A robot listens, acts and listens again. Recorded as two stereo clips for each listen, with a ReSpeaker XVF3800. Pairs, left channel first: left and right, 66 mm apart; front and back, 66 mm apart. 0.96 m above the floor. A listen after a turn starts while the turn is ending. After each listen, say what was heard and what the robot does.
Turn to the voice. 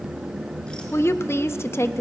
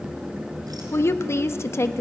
The woman speaking: 45° left. Turn 45° left.
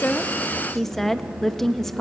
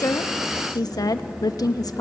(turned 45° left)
Found it: a woman speaking, straight ahead, 1 to 2 m away.